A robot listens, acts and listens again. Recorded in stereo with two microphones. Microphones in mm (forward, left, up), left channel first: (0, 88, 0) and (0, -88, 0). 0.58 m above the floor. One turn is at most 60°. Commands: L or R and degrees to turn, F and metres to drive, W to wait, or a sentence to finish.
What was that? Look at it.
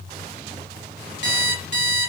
L60
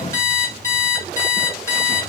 L20
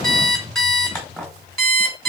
Facing the alarm clock.